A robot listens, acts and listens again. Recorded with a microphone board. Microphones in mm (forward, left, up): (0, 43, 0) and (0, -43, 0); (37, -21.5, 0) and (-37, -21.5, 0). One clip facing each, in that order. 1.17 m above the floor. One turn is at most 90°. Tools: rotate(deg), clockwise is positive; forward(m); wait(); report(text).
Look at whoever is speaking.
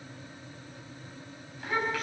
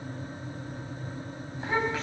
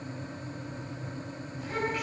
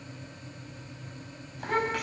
rotate(90)
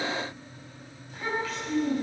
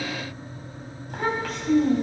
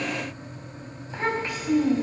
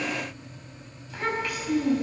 rotate(60)
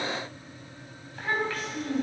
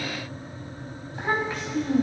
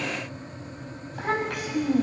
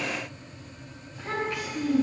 rotate(20)
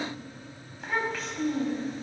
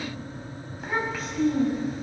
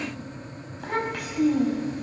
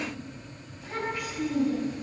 report("Facing the child speaking, over 4 m away.")